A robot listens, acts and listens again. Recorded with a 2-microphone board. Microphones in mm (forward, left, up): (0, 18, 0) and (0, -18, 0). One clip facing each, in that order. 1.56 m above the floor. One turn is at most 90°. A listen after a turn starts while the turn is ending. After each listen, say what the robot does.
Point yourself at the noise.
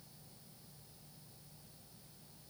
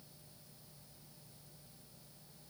Keep listening.
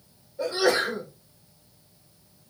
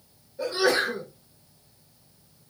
Turn 30° right.
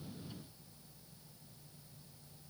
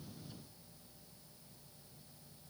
Keep listening.
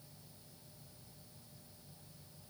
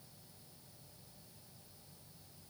I heard a sneeze, but can't make it out now. It was about 20° left or 140° right.